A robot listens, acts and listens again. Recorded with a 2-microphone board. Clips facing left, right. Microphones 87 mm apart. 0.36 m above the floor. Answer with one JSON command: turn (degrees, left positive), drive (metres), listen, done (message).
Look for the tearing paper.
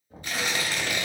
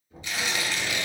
{"turn": 45}
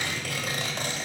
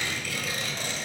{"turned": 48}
{"turn": 75}
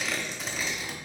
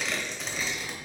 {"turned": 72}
{"done": "Facing the tearing paper, under 1 m away."}